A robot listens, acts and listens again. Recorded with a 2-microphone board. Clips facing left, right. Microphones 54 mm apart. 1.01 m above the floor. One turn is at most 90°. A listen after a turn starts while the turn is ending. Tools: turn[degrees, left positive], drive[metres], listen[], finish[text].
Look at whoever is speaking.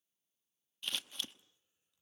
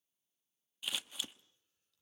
Action: listen[]
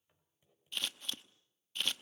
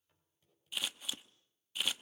Action: listen[]
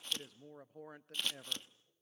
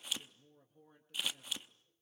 Thought: The man speaking: about 70° left or 110° left.
Action: turn[70]
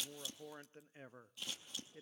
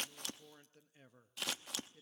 Thought: So it is at 35° left.
Action: turn[35]
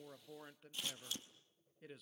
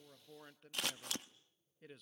Action: finish[Facing the man speaking, under 1 m away.]